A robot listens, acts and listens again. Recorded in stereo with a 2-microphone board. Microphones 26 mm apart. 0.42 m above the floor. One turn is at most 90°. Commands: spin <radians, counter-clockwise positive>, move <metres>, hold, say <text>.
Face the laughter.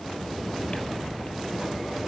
hold
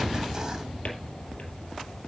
hold
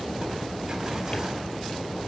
say I can't make out laughter.